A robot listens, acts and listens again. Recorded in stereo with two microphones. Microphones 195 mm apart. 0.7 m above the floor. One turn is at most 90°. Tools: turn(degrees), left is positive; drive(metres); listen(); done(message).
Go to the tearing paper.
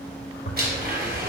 turn(degrees=90)
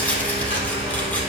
turn(degrees=10)
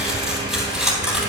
drive(metres=1.0)
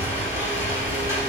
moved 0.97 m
turn(degrees=-10)
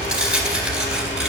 drive(metres=1.0)
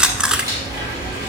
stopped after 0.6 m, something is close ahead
done("I am next to the tearing paper.")